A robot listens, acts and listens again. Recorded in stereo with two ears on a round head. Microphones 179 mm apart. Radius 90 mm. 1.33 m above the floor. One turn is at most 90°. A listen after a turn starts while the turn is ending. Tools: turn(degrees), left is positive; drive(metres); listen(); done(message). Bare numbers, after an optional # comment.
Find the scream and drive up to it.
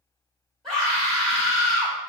turn(30)
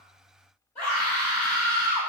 # So it is at 145° left.
turn(90)
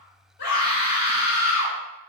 # The scream is now 95° left.
turn(90)
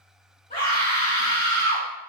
# The scream is now 30° left.
turn(30)
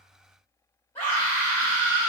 drive(1.0)
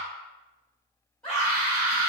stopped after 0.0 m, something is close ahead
done("Something is in my way. I am facing the scream but have not reached it.")